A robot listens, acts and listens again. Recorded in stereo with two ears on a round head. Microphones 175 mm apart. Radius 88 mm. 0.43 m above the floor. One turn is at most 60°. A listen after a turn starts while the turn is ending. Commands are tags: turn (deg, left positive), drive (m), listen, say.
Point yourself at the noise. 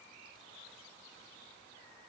<listen/>
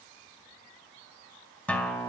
<turn deg="30"/>
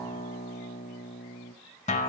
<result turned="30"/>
<turn deg="60"/>
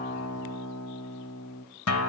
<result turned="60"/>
<turn deg="60"/>
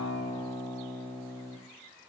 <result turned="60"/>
<turn deg="15"/>
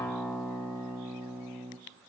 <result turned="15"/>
<say>Facing the guitar.</say>